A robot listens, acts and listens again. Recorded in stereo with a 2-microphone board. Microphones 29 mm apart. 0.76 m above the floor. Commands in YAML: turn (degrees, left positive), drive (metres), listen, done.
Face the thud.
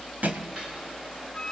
turn: -90
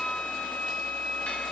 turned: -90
done: "Facing where the thud came from. I can't hear it now."